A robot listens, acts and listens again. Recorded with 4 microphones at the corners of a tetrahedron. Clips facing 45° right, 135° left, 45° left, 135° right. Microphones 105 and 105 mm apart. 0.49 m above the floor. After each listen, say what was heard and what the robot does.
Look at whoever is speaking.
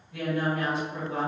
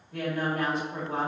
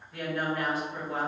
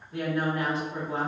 The woman speaking: 170° left. Turn 170° left.
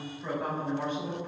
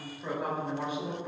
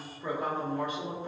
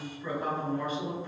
The woman speaking is now 60° left. Turn 60° left.
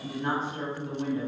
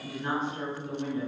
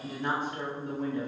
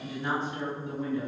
The woman speaking is now 10° left. Turn 10° left.
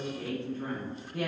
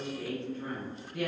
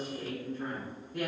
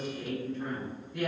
Found it: a woman speaking, straight ahead, 1 to 2 m away.